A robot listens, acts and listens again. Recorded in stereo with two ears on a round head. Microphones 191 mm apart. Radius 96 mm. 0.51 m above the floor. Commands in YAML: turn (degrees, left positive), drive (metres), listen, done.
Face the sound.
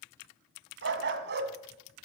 turn: -55
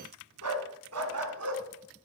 turn: -85
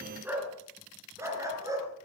turn: -15
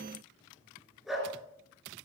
done: "Found it: a dog barking, straight ahead."